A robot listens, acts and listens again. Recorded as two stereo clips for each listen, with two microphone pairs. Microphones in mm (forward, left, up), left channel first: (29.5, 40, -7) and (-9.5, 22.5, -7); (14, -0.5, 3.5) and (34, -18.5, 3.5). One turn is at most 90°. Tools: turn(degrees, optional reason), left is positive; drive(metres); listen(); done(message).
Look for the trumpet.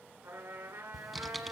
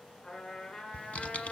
turn(degrees=-90, reason="The trumpet: 165° right.")
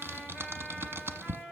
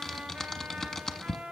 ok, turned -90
turn(degrees=-75, reason="The trumpet is now 75° right.")
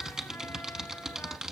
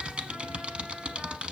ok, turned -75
listen()
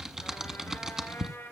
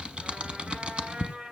done("Facing the trumpet.")